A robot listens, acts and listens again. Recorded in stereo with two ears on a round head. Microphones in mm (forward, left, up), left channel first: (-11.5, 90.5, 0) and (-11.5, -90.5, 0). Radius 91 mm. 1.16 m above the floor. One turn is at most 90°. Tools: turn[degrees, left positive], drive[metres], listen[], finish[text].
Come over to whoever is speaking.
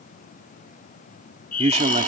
Thought: The man speaking: about 35° right or 145° right.
Action: turn[-35]
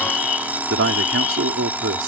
Thought: So it is at 110° right.
Action: turn[-90]
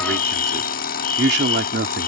Thought: The man speaking is now 55° right.
Action: turn[-55]
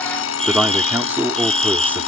Thought: The man speaking is now 10° right.
Action: turn[-10]
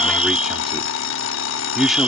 Action: drive[1.0]
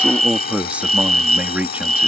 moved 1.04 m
Action: drive[1.0]
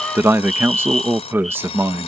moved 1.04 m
Thought: The man speaking is now 10° right.
Action: turn[-10]
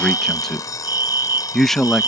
Action: drive[1.0]
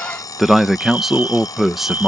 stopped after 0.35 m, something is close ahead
Action: finish[I am next to the man speaking.]